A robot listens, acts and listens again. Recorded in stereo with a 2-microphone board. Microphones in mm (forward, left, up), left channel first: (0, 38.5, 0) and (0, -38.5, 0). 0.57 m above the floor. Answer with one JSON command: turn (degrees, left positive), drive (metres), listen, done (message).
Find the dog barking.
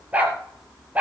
{"turn": -20}
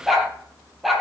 {"turn": 30}
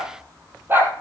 {"turn": -25}
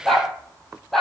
{"done": "Facing the dog barking, over 4 m away."}